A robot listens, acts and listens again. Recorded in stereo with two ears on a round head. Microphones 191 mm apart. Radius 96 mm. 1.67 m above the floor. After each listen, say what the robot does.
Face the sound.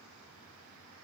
Keep listening.
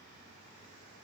Keep listening.
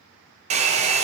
Turn 30° right.
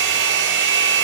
Turn 120° right.
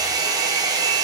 Turn 20° right.
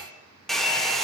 Found it: a hair dryer, straight ahead, 1 to 2 m away.